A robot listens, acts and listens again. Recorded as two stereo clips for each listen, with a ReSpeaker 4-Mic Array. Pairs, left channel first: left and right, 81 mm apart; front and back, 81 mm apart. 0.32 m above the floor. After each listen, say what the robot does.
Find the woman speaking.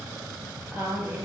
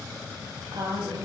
Turn 160° right.
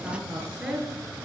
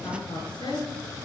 Turn 10° right.
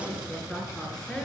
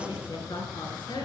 Keep listening.
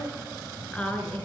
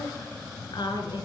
Turn 15° left.
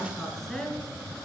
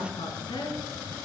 Found it: a woman speaking, straight ahead, 2 to 4 m away.